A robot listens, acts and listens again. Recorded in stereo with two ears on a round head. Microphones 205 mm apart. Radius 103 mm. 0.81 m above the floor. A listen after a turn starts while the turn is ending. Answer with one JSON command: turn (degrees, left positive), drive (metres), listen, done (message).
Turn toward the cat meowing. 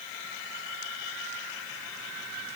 {"listen": true}
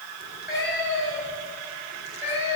{"turn": -30}
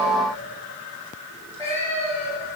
{"turn": 10}
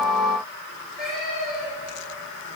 {"done": "Facing the cat meowing."}